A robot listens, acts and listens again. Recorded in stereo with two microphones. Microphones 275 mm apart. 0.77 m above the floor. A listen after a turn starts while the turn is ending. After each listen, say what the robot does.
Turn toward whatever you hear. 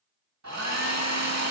Turn 90° right.
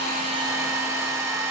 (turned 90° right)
Turn 10° right.
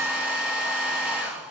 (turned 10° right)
Found it: a hair dryer, straight ahead.